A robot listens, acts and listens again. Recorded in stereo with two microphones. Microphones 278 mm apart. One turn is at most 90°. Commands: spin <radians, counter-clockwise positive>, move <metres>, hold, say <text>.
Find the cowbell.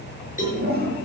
spin 0.44
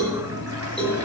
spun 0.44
say Found it: a cowbell, straight ahead.